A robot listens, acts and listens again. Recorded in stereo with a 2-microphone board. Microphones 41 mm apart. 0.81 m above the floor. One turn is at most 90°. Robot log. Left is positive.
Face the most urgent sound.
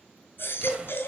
note: The baby crying: about 55° left or 125° left.
cmd yaw +55
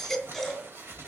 end: Facing the baby crying, 2 to 4 m away.